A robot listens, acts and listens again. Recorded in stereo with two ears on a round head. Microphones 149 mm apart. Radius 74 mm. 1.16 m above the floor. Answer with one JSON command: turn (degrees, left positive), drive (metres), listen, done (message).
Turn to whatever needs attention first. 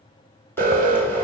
{"turn": -55}
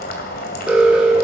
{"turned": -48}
{"done": "Found it: an alarm, straight ahead."}